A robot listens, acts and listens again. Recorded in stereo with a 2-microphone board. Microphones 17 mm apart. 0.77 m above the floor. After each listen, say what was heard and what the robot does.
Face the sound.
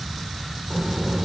The child speaking: about 35° right or 145° right. Turn 35° right.
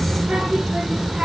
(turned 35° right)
So it is at 110° right. Turn 110° right.
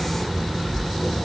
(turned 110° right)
The child speaking is now 35° left. Turn 35° left.
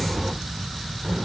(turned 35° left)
The child speaking is now 20° right. Turn 20° right.
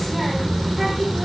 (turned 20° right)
The child speaking is now 10° right. Turn 10° right.
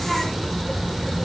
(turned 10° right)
Found it: a child speaking, straight ahead, 1 to 2 m away.